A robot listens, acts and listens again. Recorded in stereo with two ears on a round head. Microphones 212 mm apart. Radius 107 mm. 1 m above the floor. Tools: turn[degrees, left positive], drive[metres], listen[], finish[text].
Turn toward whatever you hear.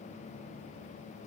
Action: listen[]
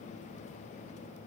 Action: listen[]
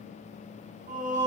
Thought: The singing: about 30° right or 150° right.
Action: turn[-30]
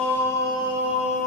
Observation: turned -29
Thought: So it is at 35° left.
Action: turn[35]
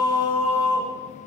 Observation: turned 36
Thought: The singing is now 30° left.
Action: turn[30]
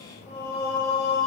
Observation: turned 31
Thought: The singing is now 15° left.
Action: turn[15]
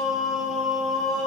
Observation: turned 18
Action: finish[Facing the singing.]